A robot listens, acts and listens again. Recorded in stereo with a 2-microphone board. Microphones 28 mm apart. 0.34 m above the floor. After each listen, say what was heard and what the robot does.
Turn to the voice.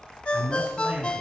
The man speaking: about 50° right or 130° right. Turn 50° right.
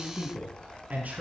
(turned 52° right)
So it is at 75° right. Turn 75° right.
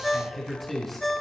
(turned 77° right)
Facing the man speaking.